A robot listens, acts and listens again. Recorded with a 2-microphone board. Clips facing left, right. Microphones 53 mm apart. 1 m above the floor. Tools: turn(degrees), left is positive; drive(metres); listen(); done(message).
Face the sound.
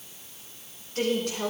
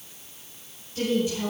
turn(degrees=50)
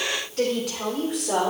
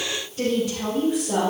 turn(degrees=70)
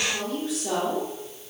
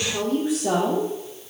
turn(degrees=-15)
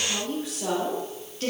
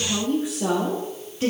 turn(degrees=-15)
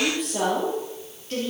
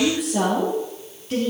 done("Facing the woman speaking.")